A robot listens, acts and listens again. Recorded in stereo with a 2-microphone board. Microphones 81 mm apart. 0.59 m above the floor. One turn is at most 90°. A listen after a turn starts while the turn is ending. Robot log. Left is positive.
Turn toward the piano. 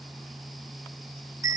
cmd idle
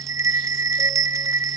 cmd idle
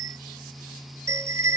end: I can't make out a piano, only a bell.